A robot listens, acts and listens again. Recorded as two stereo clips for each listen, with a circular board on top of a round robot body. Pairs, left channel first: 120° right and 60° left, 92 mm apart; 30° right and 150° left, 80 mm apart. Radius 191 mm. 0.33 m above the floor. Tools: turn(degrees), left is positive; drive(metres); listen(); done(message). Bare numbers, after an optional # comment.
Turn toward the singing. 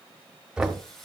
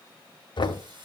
# The singing: 155° left.
turn(155)
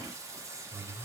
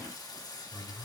done("Found it: singing, straight ahead.")